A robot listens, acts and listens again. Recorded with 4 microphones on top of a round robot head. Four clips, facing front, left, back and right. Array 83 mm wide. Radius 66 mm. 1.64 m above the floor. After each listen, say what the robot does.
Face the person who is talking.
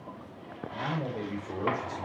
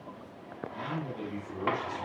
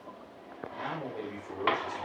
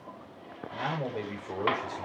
Turn 85° right.
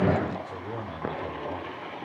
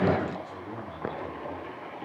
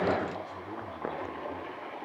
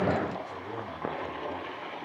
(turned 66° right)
Turn 20° right.
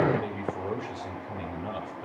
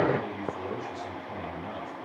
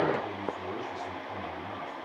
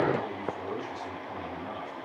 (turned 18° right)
Found it: a man speaking, straight ahead.